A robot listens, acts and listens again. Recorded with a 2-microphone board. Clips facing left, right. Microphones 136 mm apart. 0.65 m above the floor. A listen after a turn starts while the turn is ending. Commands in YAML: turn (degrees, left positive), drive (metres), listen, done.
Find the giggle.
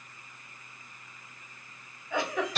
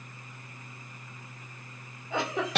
turn: -25
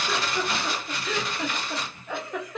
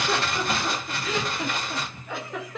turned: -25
done: "Facing the giggle, under 1 m away."